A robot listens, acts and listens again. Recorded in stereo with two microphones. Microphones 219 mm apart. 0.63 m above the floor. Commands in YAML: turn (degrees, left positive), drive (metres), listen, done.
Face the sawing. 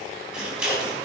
listen: true
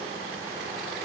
listen: true
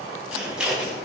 done: "I can't make out sawing to turn to."